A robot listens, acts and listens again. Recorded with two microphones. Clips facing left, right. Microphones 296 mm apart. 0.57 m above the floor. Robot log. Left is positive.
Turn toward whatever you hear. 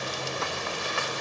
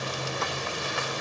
cmd idle
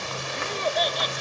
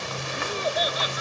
cmd yaw -30
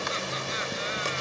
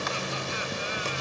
cmd idle
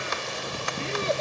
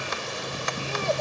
cmd idle
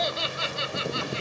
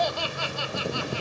note: So it is at 25° left.
cmd yaw +25
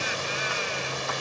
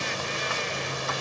cmd idle
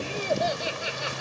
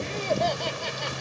cmd idle
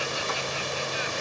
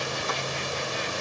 end: I heard laughter from this way, but can't make it out now.